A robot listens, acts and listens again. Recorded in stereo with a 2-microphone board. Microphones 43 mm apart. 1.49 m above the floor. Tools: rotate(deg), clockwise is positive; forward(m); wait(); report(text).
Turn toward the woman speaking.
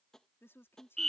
rotate(-70)
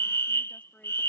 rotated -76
wait()
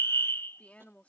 rotate(-35)
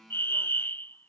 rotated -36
wait()
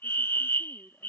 wait()
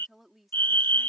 report("Found it: a woman speaking, straight ahead.")